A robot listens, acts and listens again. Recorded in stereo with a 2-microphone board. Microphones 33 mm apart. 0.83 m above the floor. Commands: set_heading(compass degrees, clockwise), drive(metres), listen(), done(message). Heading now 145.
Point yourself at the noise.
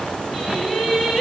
set_heading(115)
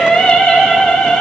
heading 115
set_heading(330)
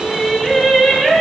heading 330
done("Facing the singing, over 4 m away.")